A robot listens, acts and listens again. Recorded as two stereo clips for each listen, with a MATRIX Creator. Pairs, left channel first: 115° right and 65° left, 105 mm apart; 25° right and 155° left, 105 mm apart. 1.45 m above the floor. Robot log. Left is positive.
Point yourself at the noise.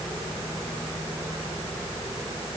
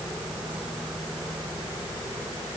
cmd idle
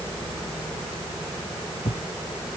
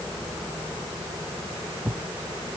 note: The thud: 125° right.
cmd yaw -125
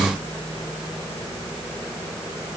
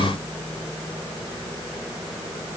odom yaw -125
end: Facing where the thud came from. I can't hear it now.